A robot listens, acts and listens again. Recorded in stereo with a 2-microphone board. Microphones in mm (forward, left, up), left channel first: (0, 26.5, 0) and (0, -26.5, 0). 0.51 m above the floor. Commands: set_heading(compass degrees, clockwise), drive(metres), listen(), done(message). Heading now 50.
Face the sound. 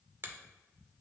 set_heading(95)
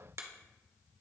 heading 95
set_heading(170)
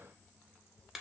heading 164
set_heading(174)
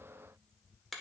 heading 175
done("Facing the finger snap.")